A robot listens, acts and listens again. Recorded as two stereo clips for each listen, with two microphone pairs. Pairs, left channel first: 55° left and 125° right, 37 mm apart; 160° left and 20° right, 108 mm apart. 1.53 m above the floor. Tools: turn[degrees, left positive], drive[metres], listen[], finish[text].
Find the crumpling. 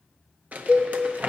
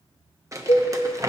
Thought: The crumpling: 80° right.
Action: turn[-80]
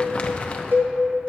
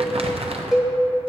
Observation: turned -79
Action: finish[Facing the crumpling.]